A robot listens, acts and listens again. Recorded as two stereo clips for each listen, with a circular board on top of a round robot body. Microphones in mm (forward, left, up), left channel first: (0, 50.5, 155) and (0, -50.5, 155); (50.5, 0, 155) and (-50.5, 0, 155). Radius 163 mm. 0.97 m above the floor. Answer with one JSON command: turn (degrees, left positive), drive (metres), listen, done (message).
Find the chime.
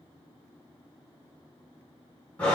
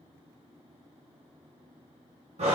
{"listen": true}
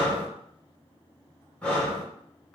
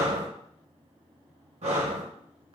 {"listen": true}
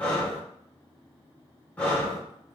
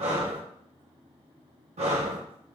{"done": "I can't make out a chime, only breathing."}